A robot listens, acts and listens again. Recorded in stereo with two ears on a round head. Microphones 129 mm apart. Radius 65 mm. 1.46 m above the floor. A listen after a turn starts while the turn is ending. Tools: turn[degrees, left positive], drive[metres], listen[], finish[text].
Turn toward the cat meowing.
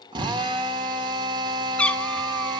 Action: turn[30]
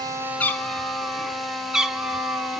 Action: turn[-30]
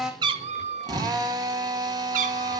Thought: So it is at 120° right.
Action: turn[-120]
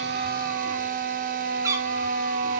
Thought: The cat meowing is now 20° right.
Action: turn[-20]
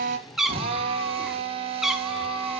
Action: finish[Found it: a cat meowing, straight ahead.]